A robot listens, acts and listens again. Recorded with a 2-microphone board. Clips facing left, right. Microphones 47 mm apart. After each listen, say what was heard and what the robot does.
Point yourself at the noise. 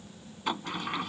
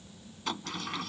The sliding door: about 20° left or 160° left. Turn 20° left.
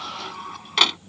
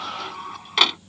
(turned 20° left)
Facing the sliding door.